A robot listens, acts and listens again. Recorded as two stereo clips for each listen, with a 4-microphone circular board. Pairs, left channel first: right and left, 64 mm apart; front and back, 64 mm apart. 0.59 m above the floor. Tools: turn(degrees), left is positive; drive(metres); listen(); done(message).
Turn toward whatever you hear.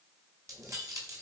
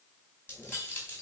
turn(degrees=60)
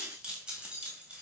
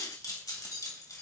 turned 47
turn(degrees=20)
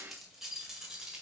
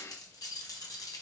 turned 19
turn(degrees=15)
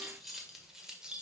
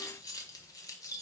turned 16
turn(degrees=15)
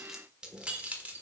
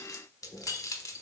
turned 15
turn(degrees=30)
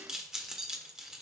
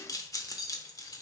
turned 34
turn(degrees=10)
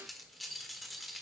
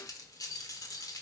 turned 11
done("Found it: keys jangling, straight ahead, 1 to 2 m away.")